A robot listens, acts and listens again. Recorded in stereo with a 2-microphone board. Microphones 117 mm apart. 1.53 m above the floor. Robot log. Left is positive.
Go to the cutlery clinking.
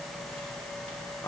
cmd idle
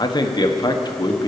cmd idle
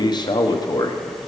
end: I can't make out cutlery clinking to turn to.